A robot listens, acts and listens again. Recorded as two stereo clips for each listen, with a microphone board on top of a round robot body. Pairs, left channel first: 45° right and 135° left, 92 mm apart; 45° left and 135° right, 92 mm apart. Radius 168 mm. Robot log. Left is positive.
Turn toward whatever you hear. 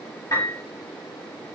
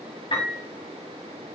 note: The piano: 15° left.
cmd yaw +15
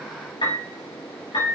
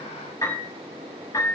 end: Facing the piano, over 4 m away.